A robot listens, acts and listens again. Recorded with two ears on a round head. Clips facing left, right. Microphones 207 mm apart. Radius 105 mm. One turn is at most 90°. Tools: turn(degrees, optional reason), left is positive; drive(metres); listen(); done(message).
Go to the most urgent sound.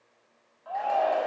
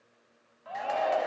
turn(degrees=-30, reason="The shout: about 30° right or 150° right.")
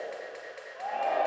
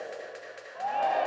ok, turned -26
turn(degrees=-90, reason="So it is at 120° right.")
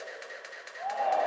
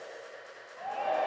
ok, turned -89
turn(degrees=-35, reason="The shout is now 35° right.")
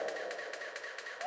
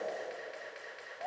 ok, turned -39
drive(metres=1.0)
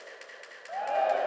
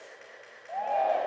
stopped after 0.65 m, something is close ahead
turn(degrees=10, reason="The shout is now 10° left.")
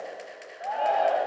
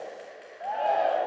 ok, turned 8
done("Something is in my way. I am facing the shout but have not reached it.")